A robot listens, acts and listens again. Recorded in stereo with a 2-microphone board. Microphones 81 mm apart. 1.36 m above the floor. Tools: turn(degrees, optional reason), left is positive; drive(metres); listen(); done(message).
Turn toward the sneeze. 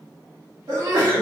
turn(degrees=-40, reason="The sneeze: about 40° right or 140° right.")
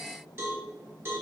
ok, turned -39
listen()
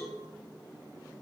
done("I heard a sneeze, but can't make it out now. It was about straight ahead or 100° right.")